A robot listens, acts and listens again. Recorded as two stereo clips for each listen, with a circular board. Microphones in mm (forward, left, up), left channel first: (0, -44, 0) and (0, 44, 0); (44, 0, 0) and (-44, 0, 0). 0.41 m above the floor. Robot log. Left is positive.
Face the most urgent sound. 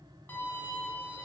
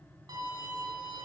cmd idle
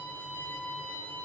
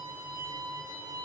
cmd idle
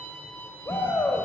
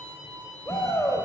note: The shout: 45° right.
cmd yaw -45
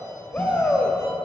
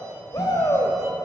note: The shout is now 25° right.
cmd yaw -25
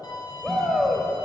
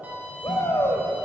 end: Found it: a shout, straight ahead.